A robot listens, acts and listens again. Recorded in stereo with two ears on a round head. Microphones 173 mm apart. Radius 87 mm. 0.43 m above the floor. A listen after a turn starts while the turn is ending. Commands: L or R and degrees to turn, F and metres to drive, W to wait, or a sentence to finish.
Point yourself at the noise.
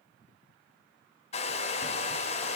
L35
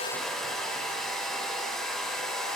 Facing the hair dryer, 1 to 2 m away.